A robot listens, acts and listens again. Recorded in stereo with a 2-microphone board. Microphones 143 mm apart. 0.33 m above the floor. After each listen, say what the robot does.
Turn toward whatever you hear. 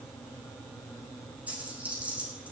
Turn 30° right.
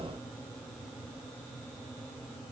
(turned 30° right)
Keep listening.
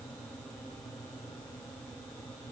I heard a dropped coin, but can't make it out now. It was about 20° left or 140° right.